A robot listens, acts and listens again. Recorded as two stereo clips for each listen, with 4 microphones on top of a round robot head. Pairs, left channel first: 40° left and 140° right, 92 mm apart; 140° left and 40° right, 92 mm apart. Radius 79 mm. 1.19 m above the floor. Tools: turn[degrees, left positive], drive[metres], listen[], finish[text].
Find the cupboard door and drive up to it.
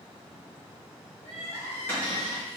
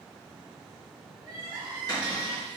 Thought: The cupboard door: 105° left.
Action: turn[105]
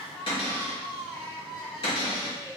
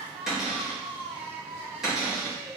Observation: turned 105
Thought: The cupboard door is now 50° left.
Action: turn[50]
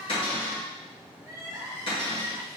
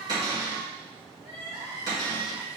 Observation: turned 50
Thought: The cupboard door is now 10° left.
Action: turn[10]
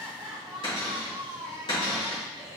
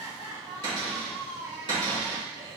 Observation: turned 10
Action: drive[1.0]
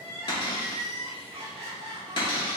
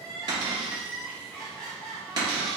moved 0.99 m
Action: drive[1.0]
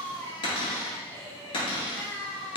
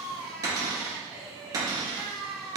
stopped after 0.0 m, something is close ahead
Thought: The cupboard door is now 10° left.
Action: turn[10]
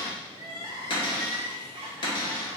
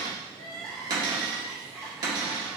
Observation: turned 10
Action: finish[Arrived at the cupboard door, straight ahead.]